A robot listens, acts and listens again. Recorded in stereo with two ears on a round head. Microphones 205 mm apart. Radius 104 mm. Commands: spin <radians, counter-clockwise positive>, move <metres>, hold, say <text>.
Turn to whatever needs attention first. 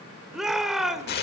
spin 0.52
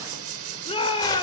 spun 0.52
spin 2.62
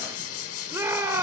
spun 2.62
spin -0.17
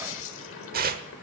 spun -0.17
hold
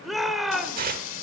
say Facing the shout, 1 to 2 m away.